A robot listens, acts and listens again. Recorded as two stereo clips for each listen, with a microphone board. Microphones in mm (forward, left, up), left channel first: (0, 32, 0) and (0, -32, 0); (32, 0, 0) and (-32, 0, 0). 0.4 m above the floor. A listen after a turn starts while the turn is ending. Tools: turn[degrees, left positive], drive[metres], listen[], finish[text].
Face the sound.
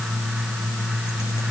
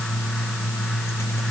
Action: listen[]
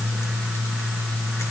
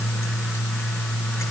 Action: listen[]
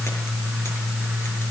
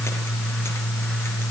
Action: finish[I can't make out anything to turn to.]